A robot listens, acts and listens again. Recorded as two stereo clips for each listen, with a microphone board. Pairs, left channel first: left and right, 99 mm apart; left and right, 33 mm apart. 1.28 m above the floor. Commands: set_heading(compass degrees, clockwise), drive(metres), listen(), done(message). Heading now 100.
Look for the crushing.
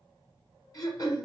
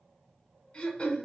listen()
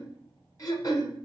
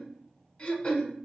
listen()
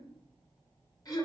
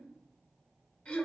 done("I can't make out crushing to turn to.")